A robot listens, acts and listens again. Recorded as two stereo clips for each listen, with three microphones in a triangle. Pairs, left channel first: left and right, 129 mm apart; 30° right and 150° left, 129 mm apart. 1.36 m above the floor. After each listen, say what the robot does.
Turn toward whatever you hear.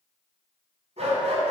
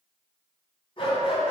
Turn 65° right.
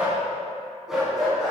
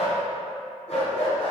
Facing the dog barking.